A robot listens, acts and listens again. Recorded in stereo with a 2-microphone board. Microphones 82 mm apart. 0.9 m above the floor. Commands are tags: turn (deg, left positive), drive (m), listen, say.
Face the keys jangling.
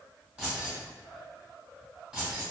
<turn deg="-30"/>
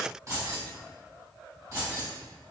<turn deg="-135"/>
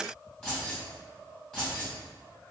<turn deg="15"/>
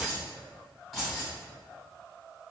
<say>Facing the keys jangling, 1 to 2 m away.</say>